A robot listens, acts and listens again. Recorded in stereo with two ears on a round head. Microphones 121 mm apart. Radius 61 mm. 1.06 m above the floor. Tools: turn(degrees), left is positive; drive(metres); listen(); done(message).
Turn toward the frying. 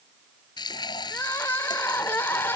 turn(degrees=35)
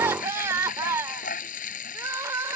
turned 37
turn(degrees=110)
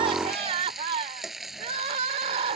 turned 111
done("Facing the frying.")